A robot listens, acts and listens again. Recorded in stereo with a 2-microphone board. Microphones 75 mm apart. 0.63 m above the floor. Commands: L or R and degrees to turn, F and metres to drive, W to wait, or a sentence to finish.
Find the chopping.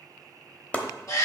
L20
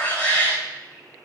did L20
W
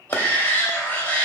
L140
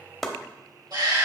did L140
Facing the chopping.